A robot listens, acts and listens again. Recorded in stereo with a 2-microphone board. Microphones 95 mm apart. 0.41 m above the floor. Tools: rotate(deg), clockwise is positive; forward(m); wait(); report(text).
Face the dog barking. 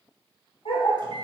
rotate(-90)
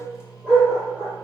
rotate(10)
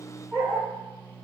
report("Found it: a dog barking, straight ahead, over 4 m away.")